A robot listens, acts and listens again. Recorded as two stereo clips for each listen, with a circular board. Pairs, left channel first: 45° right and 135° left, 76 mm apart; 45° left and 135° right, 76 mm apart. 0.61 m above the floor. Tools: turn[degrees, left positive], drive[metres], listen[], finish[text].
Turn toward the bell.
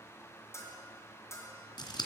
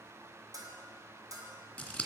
Thought: The bell: 95° right.
Action: turn[-95]
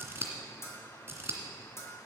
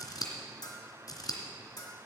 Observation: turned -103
Thought: The bell is now 10° left.
Action: turn[10]
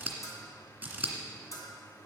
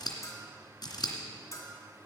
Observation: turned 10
Action: finish[Facing the bell.]